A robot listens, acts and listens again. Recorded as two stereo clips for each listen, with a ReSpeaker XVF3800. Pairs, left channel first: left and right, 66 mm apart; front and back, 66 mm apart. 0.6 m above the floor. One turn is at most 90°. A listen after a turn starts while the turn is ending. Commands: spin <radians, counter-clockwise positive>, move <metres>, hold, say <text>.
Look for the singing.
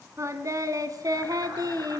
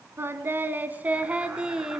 spin -1.57
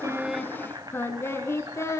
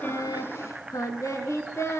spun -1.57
spin 0.79
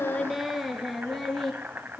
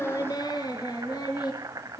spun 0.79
spin 0.17
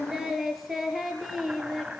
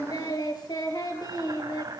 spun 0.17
say Facing the singing.